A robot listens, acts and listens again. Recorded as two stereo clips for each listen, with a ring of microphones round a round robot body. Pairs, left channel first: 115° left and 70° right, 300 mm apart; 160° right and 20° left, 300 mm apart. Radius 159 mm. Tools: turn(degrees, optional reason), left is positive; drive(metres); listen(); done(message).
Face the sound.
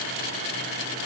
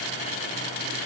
listen()
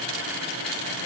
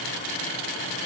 listen()
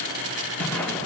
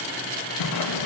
turn(degrees=-160, reason="The whoosh: 160° right.")
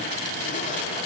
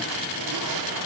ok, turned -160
listen()
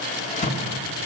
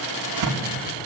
turn(degrees=45, reason="The whoosh is now 45° left.")
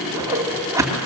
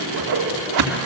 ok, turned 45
turn(degrees=15, reason="The whoosh is now 15° left.")
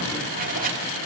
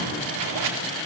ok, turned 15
done("Found it: a whoosh, straight ahead.")